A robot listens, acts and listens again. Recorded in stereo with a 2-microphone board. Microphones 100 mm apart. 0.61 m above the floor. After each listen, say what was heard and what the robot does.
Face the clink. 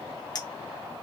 The clink: about 40° left or 140° left. Turn 40° left.
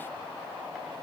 Keep listening.
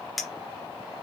Facing the clink, 1 to 2 m away.